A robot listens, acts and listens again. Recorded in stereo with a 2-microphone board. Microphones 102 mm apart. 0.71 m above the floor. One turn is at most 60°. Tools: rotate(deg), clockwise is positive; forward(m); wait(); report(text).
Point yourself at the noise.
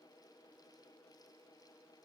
wait()
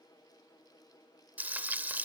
rotate(15)
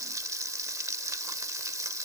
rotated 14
rotate(60)
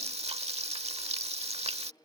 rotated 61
rotate(60)
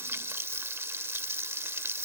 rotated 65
rotate(25)
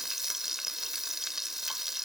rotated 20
report("Found it: frying, straight ahead.")